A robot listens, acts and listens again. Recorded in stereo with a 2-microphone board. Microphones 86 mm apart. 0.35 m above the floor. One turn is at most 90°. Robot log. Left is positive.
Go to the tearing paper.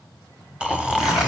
cmd yaw -30
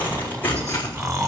note: So it is at 20° left.
cmd yaw +20
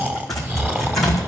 cmd fwd 1.0
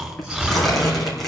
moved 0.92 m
cmd fwd 1.0
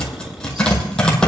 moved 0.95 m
note: The tearing paper is now 10° left.
cmd yaw +10
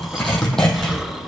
cmd fwd 1.0
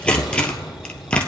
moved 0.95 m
note: The tearing paper is now 15° left.
cmd yaw +15
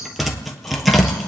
cmd fwd 1.0
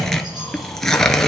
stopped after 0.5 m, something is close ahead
end: I am next to the tearing paper.